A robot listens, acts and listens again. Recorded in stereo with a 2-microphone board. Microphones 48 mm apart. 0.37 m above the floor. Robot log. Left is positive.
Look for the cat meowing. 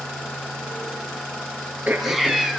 cmd yaw -30
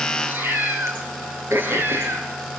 note: So it is at 130° right.
cmd yaw -130
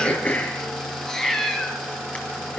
note: The cat meowing is now 15° left.
cmd yaw +15
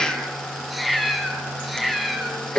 end: Found it: a cat meowing, straight ahead, 2 to 4 m away.